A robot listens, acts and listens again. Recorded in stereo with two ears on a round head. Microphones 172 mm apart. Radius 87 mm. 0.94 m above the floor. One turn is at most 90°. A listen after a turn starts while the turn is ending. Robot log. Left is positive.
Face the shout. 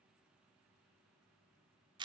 cmd idle
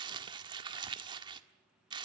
cmd idle
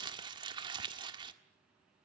end: I can't make out a shout, only crumpling.